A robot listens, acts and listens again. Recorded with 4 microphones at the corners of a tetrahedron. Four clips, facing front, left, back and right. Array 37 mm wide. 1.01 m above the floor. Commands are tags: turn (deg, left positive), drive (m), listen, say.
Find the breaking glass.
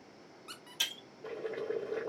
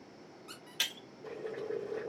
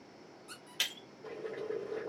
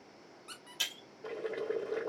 <turn deg="140"/>
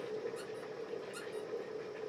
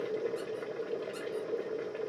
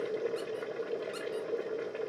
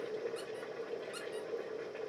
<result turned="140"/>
<say>I heard breaking glass from this way, but can't make it out now.</say>